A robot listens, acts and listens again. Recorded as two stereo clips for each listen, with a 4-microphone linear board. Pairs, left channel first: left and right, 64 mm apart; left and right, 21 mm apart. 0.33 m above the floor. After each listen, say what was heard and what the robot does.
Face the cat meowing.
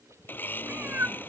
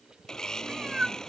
The cat meowing: about 35° right or 145° right. Turn 35° right.
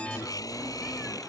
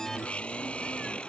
Keep listening.
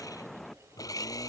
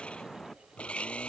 Facing the cat meowing.